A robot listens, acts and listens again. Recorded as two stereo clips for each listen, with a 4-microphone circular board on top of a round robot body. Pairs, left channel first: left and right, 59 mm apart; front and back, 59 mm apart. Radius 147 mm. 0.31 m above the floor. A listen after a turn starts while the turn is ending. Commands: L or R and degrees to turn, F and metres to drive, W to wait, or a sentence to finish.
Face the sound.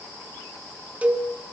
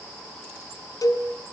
R25
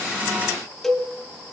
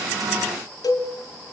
Facing the cowbell.